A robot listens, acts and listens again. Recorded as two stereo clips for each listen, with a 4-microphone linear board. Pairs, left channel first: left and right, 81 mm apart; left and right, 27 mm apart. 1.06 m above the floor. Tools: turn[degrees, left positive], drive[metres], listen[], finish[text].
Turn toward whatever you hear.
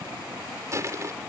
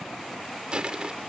Thought: The crushing: about 40° right or 140° right.
Action: turn[-40]
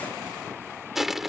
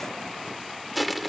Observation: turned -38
Action: finish[Facing the crushing.]